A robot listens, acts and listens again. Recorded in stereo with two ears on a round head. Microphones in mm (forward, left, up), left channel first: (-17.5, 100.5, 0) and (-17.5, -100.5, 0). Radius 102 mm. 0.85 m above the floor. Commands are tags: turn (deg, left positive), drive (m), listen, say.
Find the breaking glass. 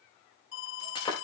<turn deg="20"/>
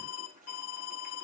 <listen/>
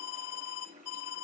<say>I heard breaking glass, but can't make it out now. It was about straight ahead or 140° left.</say>